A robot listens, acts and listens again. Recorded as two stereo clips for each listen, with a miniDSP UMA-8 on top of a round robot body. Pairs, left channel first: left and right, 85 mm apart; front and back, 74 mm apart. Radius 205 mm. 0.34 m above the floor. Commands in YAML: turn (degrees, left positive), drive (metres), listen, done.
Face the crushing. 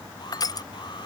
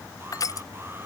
turn: 45
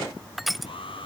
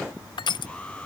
done: "Facing the crushing."